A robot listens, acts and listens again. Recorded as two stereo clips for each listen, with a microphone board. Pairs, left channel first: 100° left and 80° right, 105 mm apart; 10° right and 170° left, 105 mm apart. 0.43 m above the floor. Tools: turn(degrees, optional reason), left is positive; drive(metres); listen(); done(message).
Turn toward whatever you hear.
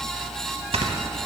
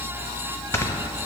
turn(degrees=-80, reason="The snoring: 80° right.")
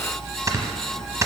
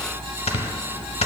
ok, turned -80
turn(degrees=-20, reason="The snoring is now 20° right.")
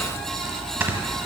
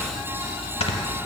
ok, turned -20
turn(degrees=-10, reason="The snoring is now 10° right.")
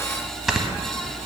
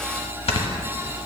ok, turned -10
done("Facing the snoring.")